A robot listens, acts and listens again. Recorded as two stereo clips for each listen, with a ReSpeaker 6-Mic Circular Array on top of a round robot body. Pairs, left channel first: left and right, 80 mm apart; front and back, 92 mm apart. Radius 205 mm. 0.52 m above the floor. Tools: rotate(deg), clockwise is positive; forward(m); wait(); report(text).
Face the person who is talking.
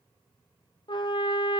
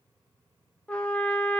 wait()
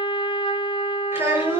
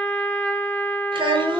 rotate(150)
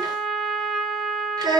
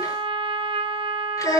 rotate(45)
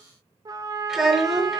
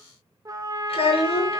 report("Found it: a child speaking, straight ahead, over 4 m away.")